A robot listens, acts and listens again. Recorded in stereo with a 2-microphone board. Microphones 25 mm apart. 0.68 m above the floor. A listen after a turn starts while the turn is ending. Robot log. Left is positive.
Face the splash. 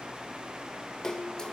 note: The splash: about 30° left or 150° left.
cmd yaw +30
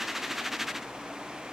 cmd idle
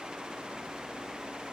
end: I heard a splash, but can't make it out now. It was about straight ahead or 120° left.